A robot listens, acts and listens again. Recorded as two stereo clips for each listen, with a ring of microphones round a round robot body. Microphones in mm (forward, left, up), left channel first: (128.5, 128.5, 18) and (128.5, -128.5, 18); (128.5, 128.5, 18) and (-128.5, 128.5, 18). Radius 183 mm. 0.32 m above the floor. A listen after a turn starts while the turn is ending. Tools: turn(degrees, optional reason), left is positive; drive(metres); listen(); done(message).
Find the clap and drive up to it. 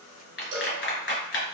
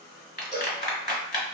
turn(degrees=55, reason="The clap: 55° left.")
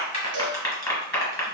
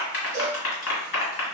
turn(degrees=15, reason="The clap is now 15° left.")
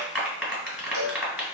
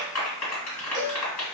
drive(metres=1.0)
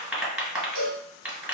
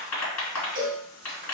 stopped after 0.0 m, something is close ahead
done("Blocked. The clap is further on, straight ahead.")